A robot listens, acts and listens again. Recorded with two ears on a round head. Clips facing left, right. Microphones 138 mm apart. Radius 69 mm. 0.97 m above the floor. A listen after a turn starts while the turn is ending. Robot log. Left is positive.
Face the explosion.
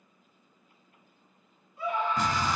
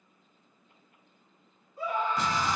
note: The explosion: about 45° left or 135° left.
cmd yaw +45
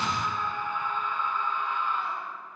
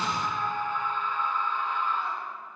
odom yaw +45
cmd idle
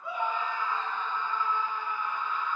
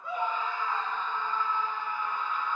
end: I heard an explosion, but can't make it out now. It was about straight ahead or 90° left.